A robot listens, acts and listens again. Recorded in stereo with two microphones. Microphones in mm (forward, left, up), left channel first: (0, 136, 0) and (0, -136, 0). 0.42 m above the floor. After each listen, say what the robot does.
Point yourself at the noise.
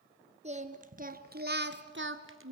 Turn 55° right.
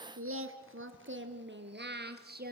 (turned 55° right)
Turn 35° right.
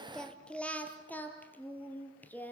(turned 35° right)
Facing the singing, 2 to 4 m away.